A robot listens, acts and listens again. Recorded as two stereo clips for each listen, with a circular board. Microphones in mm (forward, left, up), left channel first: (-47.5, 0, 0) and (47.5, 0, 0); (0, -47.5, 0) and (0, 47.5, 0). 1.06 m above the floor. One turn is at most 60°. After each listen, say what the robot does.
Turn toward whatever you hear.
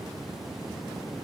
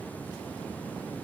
Keep listening.
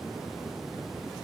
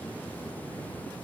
Keep listening.
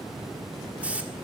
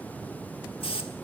Turn 60° right.
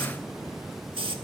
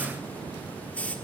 Turn 15° right.
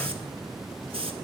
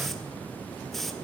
Facing the hiss, 1 to 2 m away.